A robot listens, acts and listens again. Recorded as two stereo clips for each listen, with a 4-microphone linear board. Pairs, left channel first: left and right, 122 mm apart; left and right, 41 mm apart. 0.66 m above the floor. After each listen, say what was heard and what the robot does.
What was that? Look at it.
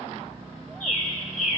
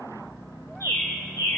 Turn 90° left.
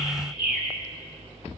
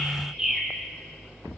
Facing the bird.